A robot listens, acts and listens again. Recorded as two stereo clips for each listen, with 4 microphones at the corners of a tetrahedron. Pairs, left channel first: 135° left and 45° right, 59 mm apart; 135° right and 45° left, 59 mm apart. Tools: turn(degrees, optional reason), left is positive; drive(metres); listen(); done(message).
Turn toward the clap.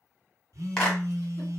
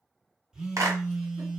turn(degrees=60, reason="The clap: 60° left.")
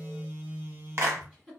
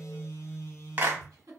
turn(degrees=-10, reason="The clap is now 10° right.")
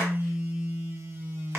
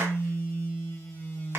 listen()
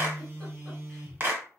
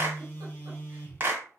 done("Found it: a clap, straight ahead, 1 to 2 m away.")